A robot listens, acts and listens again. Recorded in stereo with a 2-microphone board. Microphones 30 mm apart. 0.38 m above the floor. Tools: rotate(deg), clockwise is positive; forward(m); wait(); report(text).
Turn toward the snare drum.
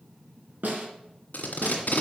rotate(90)
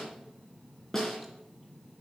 rotate(-10)
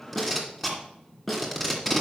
report("Facing the snare drum.")